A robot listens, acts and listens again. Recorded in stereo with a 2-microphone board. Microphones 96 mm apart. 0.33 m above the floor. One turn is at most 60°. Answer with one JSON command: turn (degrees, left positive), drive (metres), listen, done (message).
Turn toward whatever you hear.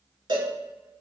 {"turn": -50}
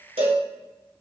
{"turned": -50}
{"turn": -60}
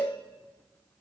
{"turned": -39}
{"turn": -40}
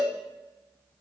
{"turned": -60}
{"turn": 20}
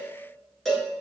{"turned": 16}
{"done": "Found it: a cowbell, straight ahead, 1 to 2 m away."}